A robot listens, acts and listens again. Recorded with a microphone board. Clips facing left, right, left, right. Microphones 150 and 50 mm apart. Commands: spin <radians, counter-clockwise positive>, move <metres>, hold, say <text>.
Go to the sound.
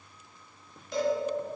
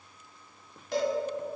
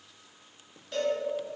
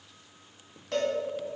spin -1.31
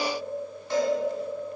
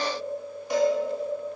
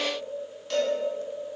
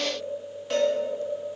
spin -0.26
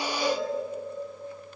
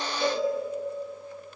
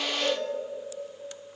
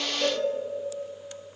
move 1.0
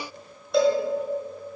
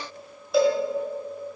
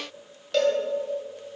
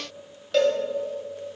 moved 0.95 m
move 1.0
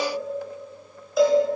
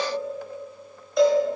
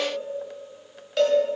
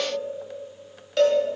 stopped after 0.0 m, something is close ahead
say Arrived at the cowbell, straight ahead.